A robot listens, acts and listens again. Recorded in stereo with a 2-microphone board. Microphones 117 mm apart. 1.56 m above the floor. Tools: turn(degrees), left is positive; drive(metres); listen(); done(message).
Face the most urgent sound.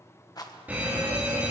turn(degrees=-30)
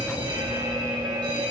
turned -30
turn(degrees=-140)
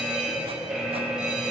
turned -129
done("Found it: a fire alarm, straight ahead.")